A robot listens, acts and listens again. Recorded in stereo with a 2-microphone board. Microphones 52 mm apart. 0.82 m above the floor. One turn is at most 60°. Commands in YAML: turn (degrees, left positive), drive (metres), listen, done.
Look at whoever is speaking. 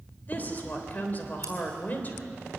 turn: 35
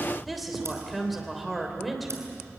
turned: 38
done: "Facing the woman speaking."